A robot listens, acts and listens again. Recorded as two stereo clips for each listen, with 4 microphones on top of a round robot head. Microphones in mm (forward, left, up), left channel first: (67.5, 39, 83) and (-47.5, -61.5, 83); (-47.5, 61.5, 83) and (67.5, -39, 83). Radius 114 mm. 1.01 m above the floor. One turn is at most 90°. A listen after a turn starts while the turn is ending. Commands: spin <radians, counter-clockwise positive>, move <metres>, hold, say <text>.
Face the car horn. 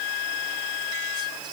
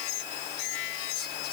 hold
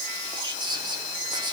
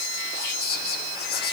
hold
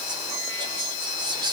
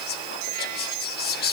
say I can't make out a car horn to turn to.